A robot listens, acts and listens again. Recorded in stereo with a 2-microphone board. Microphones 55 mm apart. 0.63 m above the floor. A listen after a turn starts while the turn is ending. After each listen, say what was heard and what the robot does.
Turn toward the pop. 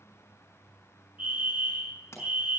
The pop: about 50° left or 130° left. Turn 50° left.
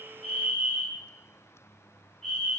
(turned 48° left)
Keep listening.
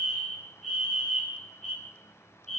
I heard a pop, but can't make it out now. It was about straight ahead or 85° left.